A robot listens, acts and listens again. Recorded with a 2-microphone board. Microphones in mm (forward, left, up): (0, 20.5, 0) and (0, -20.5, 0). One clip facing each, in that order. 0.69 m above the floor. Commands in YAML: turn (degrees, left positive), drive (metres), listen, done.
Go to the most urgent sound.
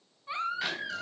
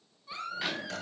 turn: 35
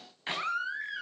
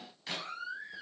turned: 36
turn: 110
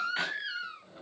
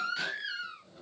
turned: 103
drive: 1.0
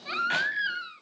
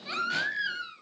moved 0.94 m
turn: 10
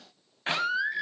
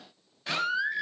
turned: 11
drive: 1.0
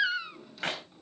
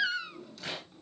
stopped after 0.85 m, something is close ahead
turn: 10
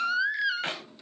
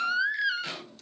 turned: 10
done: "I am next to the baby crying."